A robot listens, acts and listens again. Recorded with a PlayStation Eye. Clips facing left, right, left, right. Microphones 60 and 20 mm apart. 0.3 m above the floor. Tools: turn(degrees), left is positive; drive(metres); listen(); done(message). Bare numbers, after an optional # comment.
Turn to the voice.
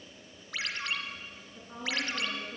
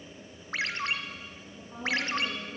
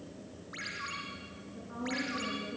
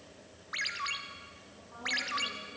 # The woman speaking: about 35° left or 145° left.
turn(35)
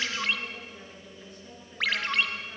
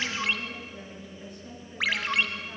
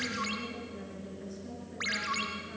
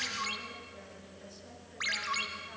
done("Found it: a woman speaking, straight ahead, over 4 m away.")